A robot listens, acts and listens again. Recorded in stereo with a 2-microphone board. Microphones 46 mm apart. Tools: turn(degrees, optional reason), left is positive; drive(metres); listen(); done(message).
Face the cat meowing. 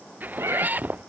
turn(degrees=-70, reason="The cat meowing: about 70° right or 110° right.")
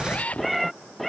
done("Found it: a cat meowing, straight ahead.")